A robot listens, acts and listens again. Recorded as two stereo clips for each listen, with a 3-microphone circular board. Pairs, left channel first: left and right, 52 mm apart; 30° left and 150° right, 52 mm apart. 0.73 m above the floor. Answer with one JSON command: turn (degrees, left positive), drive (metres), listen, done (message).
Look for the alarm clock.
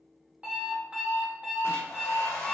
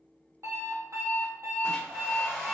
{"turn": -155}
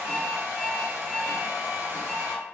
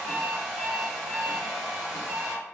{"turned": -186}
{"turn": 30}
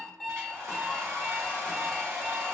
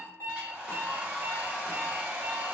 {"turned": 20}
{"turn": 10}
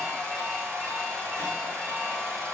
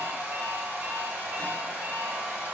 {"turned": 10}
{"listen": true}
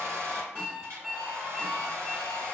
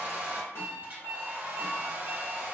{"done": "Found it: an alarm clock, straight ahead."}